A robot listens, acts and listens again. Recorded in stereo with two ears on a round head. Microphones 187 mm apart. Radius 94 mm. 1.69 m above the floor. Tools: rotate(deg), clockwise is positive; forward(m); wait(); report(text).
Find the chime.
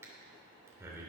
wait()
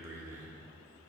wait()
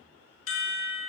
rotate(-70)
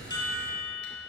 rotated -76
rotate(-20)
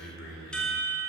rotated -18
report("Found it: a chime, straight ahead, 1 to 2 m away.")